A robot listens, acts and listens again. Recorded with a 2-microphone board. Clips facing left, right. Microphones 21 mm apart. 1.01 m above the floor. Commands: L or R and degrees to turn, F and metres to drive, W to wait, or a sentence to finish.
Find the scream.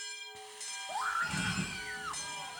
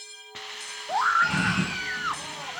R30
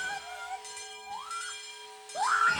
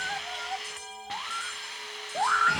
Found it: a scream, straight ahead.